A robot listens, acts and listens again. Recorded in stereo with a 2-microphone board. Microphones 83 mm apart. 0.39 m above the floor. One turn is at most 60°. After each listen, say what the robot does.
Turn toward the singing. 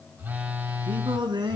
Turn 60° right.
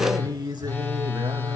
Turn 60° right.
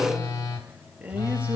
Turn 20° right.
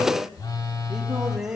Turn 10° right.
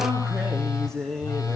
Facing the singing.